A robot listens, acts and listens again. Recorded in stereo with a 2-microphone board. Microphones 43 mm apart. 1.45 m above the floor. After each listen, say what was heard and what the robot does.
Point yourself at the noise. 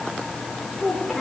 Turn 30° left.
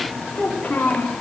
So it is at 145° left. Turn 145° left.
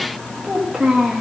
The child speaking is now 10° right. Turn 10° right.
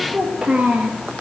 The child speaking is now 20° right. Turn 20° right.
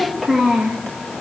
Facing the child speaking.